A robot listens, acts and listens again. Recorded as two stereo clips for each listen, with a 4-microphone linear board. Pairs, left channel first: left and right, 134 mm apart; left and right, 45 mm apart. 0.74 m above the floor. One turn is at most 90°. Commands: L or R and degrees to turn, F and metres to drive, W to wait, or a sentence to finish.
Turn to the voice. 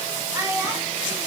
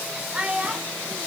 R20
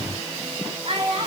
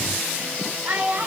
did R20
R90
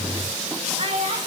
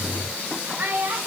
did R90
R60
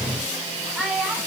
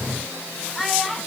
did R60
R10
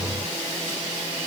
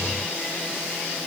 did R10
W
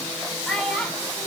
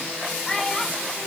Found it: a child speaking, straight ahead.